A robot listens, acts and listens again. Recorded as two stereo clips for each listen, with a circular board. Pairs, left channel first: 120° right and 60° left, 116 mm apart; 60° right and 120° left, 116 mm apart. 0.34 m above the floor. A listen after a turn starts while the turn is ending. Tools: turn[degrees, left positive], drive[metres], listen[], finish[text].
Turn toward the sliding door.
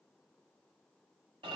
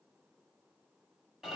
Action: listen[]
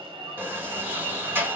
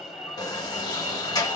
Thought: The sliding door: 10° right.
Action: turn[-10]
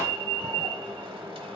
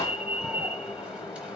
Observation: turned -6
Action: finish[Facing the sliding door.]